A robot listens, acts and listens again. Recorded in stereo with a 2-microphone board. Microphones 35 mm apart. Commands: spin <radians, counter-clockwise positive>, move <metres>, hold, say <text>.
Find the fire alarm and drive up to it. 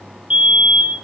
spin -0.52
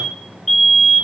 move 1.0
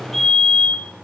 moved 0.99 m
spin 0.17
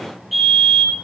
move 1.0
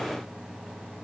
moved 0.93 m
hold
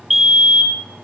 move 1.0
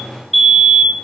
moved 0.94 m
move 1.0
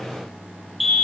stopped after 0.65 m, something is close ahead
say Arrived at the fire alarm, straight ahead.